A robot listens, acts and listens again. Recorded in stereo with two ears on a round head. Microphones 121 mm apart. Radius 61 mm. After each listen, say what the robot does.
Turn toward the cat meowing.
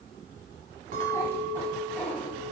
Turn 30° left.
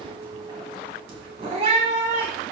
Turn 50° right.
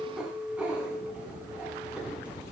Turn 10° right.
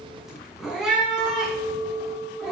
Facing the cat meowing, 2 to 4 m away.